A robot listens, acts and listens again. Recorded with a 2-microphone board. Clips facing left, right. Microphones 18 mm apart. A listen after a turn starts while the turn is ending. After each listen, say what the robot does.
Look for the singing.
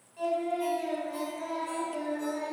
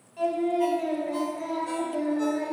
Turn 30° left.
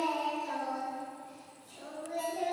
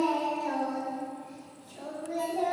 Turn 30° left.
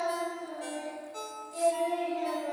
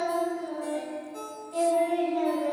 Turn 20° right.
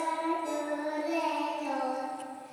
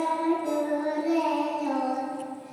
Found it: singing, straight ahead, over 4 m away.